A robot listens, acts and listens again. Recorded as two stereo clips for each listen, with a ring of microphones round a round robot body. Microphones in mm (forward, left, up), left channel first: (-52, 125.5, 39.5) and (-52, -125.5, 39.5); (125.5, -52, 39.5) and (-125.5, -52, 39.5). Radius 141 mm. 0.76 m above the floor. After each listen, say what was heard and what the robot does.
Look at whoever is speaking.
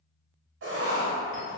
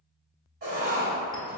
Keep listening.
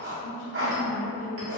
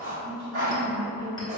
The woman speaking: 75° left. Turn 75° left.
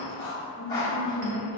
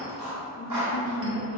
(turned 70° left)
Found it: a woman speaking, straight ahead.